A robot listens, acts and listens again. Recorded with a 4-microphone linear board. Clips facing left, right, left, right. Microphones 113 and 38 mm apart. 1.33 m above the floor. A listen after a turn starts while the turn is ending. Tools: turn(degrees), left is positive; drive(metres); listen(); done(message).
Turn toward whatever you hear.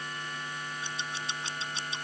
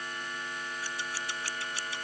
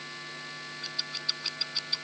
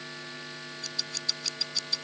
turn(degrees=20)
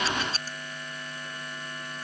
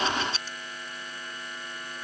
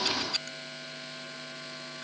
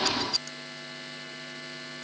turn(degrees=140)
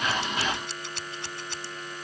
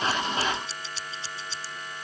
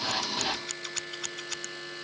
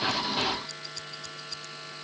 turn(degrees=60)
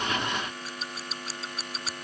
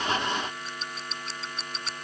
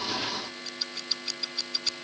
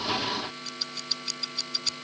done("Found it: scissors, straight ahead.")